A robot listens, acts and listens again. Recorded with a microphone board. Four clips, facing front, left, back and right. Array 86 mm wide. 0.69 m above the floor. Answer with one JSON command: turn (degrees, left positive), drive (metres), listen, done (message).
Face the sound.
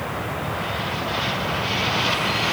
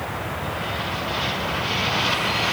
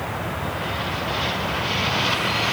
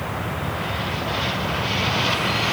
{"listen": true}
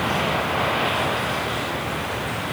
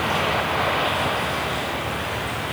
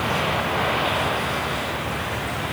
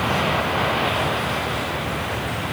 {"listen": true}
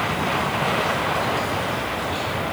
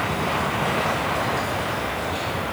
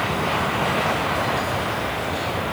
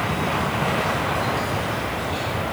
{"done": "I can't make out anything."}